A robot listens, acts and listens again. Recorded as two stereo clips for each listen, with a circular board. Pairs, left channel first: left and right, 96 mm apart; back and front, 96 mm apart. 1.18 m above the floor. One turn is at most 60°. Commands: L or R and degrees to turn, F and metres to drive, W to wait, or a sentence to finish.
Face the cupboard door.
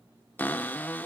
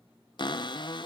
L60
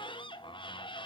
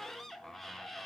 L60
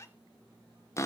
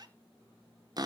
L35
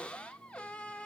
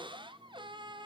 L15
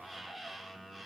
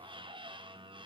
Facing the cupboard door.